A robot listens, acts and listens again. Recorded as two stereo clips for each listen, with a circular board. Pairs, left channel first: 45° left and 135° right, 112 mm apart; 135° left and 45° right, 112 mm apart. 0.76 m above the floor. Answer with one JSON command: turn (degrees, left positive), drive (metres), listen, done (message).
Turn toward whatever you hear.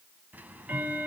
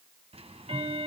{"turn": -60}
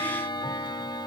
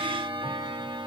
{"done": "Found it: ticking, straight ahead, 1 to 2 m away."}